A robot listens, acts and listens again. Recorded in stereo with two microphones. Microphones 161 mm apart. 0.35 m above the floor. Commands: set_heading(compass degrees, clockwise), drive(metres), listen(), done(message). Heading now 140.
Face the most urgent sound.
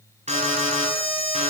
set_heading(185)
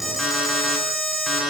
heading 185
done("Found it: an alarm, straight ahead.")